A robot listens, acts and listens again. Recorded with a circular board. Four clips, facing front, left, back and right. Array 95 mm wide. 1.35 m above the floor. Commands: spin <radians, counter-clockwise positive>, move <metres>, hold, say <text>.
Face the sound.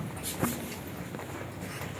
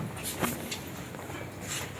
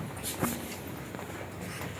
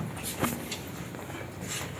hold
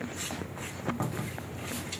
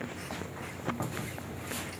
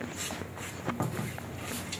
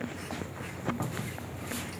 hold
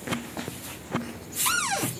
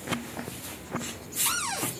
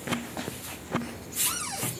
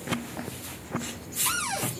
say Found it: a cupboard door, straight ahead.